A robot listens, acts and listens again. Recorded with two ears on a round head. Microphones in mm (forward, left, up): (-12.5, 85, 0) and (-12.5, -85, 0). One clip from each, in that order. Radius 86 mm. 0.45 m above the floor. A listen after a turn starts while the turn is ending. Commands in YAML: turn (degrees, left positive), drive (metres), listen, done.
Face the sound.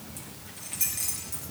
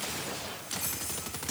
turn: 90
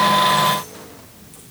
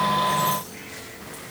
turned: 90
listen: true
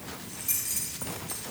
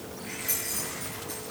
done: "Found it: keys jangling, straight ahead, over 4 m away."